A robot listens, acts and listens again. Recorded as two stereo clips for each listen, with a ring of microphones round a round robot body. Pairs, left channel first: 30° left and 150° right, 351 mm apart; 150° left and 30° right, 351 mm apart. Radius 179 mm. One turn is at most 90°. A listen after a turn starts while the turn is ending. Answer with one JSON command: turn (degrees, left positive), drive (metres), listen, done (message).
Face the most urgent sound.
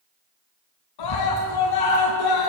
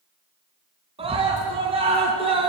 {"turn": 45}
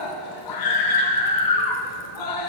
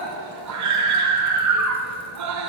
{"turn": 10}
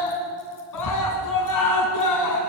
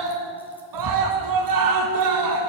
{"done": "Found it: a scream, straight ahead."}